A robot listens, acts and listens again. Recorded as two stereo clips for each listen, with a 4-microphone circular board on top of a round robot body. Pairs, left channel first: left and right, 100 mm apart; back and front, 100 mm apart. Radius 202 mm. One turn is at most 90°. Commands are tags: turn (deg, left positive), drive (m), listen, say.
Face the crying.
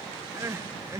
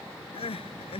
<turn deg="-90"/>
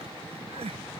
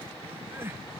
<turn deg="-70"/>
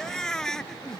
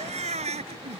<say>Facing the crying.</say>